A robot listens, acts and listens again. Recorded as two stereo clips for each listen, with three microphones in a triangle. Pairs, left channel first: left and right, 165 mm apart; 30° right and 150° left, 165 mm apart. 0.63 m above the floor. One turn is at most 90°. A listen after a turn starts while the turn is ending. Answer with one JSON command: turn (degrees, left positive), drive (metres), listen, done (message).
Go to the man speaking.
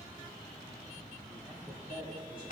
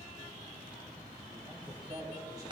{"turn": -90}
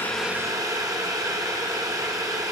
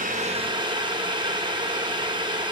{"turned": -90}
{"turn": -55}
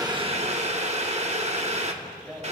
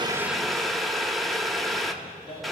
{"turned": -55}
{"drive": 1.0}
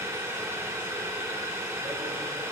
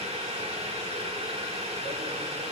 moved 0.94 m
{"listen": true}
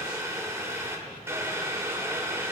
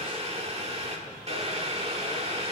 {"listen": true}
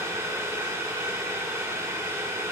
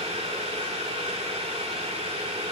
{"done": "Facing where the man speaking came from. I can't hear it now. I did not reach it."}